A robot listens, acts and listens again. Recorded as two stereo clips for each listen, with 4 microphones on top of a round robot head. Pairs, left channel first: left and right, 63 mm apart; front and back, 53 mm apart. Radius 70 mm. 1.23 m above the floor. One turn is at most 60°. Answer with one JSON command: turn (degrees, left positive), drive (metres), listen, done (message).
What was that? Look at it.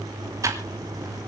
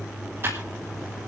{"turn": -60}
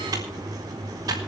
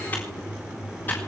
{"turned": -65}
{"turn": -60}
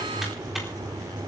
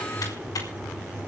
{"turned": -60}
{"listen": true}
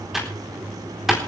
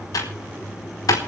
{"done": "Facing the typing on a keyboard."}